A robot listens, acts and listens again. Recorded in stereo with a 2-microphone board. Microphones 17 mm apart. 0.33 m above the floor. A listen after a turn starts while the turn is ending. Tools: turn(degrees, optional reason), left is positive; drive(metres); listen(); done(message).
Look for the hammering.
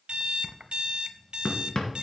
turn(degrees=45, reason="The hammering: about 45° left or 135° left.")
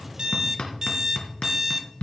turn(degrees=85, reason="So it is at 85° left.")
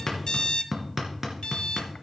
turn(degrees=-20, reason="The hammering is now 20° right.")
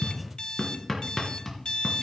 done("Facing the hammering, 2 to 4 m away.")